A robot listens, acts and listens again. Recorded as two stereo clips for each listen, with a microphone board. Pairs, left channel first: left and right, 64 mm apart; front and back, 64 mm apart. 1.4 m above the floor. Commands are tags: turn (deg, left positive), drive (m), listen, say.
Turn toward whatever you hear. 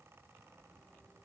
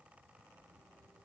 <listen/>
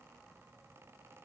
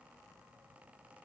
<listen/>
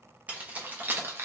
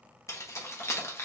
<turn deg="-45"/>
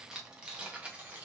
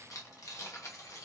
<turn deg="-30"/>
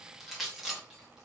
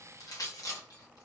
<say>Facing the keys jangling, 1 to 2 m away.</say>